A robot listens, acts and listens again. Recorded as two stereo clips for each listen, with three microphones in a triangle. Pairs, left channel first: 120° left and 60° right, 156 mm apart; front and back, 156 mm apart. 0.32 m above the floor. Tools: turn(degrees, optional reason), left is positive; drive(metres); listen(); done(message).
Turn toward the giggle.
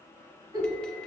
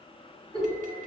turn(degrees=-125, reason="The giggle: 125° right.")
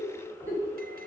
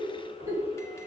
turn(degrees=-40, reason="The giggle is now 40° right.")
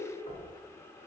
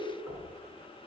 listen()
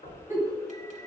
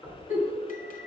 turn(degrees=10, reason="The giggle is now 10° left.")
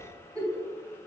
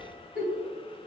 done("Facing the giggle.")